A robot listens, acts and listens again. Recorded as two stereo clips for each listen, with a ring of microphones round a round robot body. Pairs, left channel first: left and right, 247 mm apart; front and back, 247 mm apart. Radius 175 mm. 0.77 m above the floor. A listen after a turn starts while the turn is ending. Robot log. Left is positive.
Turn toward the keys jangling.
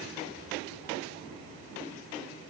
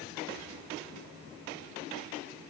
cmd idle
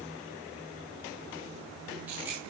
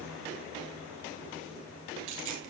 note: The keys jangling: 175° right.
cmd yaw -175
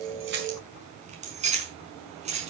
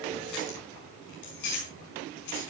note: The keys jangling is now 25° right.
cmd yaw -25
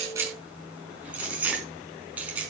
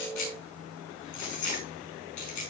end: Found it: keys jangling, straight ahead, over 4 m away.